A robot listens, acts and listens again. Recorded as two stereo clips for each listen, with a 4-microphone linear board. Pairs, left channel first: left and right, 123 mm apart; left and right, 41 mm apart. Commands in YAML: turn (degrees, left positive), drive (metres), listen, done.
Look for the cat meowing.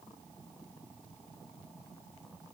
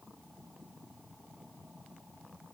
listen: true
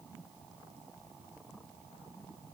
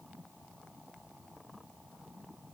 listen: true
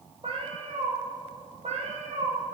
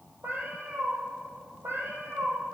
turn: -65
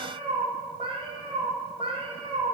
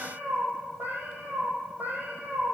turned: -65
turn: -45
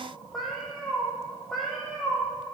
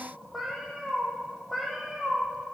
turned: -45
done: "Facing the cat meowing, 2 to 4 m away."